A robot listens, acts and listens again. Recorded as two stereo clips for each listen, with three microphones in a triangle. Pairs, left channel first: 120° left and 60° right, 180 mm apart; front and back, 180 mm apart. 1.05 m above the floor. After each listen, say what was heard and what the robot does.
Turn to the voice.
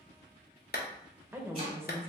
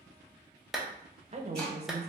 The woman speaking: 135° right. Turn 135° right.
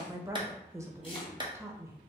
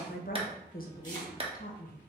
The woman speaking is now 10° left. Turn 10° left.
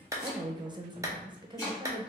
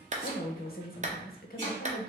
Facing the woman speaking, under 1 m away.